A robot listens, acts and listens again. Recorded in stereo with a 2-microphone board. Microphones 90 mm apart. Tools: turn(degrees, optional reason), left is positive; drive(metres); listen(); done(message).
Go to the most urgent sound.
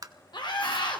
turn(degrees=65, reason="The scream: about 65° left or 115° left.")
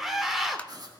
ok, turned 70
drive(metres=1.0)
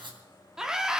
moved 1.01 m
drive(metres=1.0)
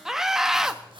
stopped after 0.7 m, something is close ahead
done("Arrived at the scream, straight ahead.")